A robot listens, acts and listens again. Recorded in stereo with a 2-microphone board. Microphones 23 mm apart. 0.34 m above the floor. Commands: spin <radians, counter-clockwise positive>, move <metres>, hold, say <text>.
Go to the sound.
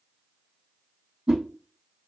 spin -0.61
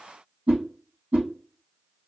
spin -1.92
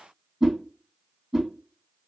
spin -0.26
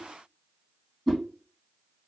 move 1.0
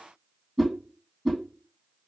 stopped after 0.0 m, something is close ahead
say Blocked. The whoosh is further on, straight ahead.